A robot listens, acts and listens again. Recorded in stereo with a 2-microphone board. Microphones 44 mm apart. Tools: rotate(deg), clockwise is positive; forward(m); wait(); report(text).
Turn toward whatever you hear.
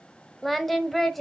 rotate(-30)
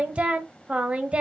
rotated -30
rotate(30)
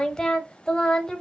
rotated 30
rotate(-15)
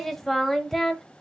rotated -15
report("Facing the singing.")